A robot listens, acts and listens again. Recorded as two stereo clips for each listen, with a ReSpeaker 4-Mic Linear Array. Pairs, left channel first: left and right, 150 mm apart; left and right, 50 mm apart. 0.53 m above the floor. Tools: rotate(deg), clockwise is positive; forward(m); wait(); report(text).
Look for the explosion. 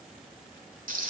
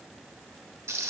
wait()
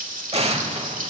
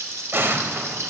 rotate(45)
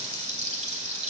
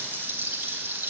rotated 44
wait()
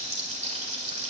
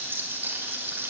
report("I heard an explosion, but can't make it out now. It was about straight ahead or 95° right.")